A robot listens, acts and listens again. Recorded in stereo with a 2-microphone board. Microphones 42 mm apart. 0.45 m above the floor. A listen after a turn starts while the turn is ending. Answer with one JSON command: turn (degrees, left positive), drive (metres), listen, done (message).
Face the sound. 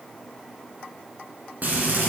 {"turn": -45}
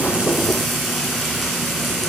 {"done": "Facing the frying."}